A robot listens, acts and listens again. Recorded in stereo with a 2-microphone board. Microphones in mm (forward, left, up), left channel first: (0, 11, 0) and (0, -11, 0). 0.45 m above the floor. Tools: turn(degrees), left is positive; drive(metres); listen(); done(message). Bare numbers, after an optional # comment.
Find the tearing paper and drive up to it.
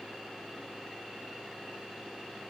listen()
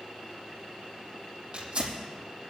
# The tearing paper: about 35° right or 145° right.
turn(-35)
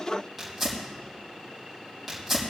drive(1.0)
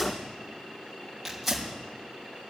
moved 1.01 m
drive(1.0)
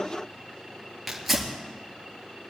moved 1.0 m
drive(1.0)
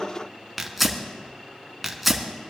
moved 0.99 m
drive(1.0)
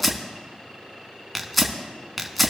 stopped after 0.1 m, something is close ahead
done("I am next to the tearing paper.")